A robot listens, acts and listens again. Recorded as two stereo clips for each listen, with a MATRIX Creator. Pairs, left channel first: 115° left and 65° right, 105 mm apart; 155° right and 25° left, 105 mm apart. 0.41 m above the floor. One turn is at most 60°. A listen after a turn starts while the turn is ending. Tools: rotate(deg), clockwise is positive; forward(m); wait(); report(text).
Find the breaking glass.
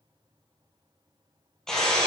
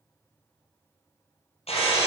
rotate(60)
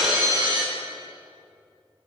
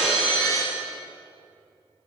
rotate(60)
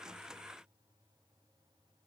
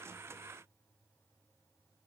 rotate(45)
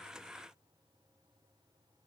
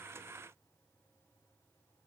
report("I heard breaking glass from this way, but can't make it out now.")